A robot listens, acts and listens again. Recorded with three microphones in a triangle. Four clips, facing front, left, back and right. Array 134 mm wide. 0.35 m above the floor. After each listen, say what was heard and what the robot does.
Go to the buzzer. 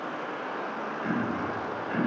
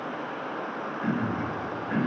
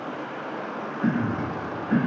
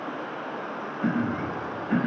Keep listening.
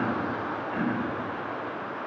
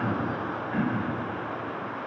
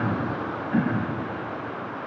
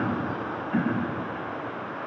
Keep listening.
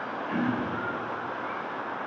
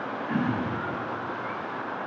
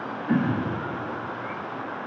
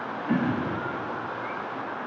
I can't make out a buzzer, only throat clearing.